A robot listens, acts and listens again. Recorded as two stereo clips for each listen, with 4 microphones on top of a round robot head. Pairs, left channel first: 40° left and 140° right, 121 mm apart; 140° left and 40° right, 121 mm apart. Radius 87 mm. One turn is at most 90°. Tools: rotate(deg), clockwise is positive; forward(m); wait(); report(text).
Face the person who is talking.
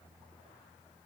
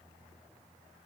wait()
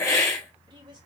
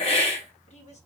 rotate(-90)
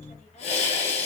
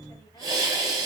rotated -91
rotate(-80)
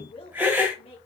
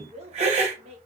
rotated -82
report("Facing the woman speaking, 2 to 4 m away.")